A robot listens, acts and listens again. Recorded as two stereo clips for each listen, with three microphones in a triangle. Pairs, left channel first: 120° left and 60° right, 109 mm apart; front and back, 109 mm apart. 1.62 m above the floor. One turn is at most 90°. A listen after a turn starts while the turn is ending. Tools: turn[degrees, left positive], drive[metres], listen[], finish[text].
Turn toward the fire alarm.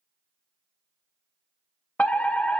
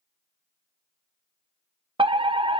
Thought: The fire alarm: 165° right.
Action: turn[-90]
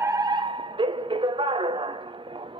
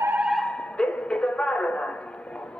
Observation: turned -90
Thought: The fire alarm is now 80° right.
Action: turn[-80]
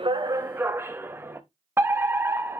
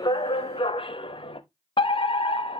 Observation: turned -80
Action: finish[Found it: a fire alarm, straight ahead, 1 to 2 m away.]